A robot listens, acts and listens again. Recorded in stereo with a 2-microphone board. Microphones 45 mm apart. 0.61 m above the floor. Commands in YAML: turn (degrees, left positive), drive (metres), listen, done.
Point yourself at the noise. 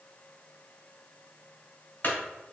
turn: 45
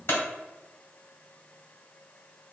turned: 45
turn: 85
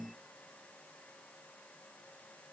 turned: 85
done: "Facing where the clunk came from. I can't hear it now."